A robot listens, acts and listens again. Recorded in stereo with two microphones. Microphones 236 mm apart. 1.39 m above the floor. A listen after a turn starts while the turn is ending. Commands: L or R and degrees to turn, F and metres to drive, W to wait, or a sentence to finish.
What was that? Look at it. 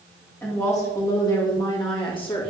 L25
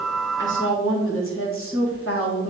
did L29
L110
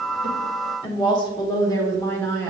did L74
L10
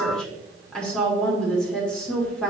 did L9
Found it: a woman speaking, straight ahead, 1 to 2 m away.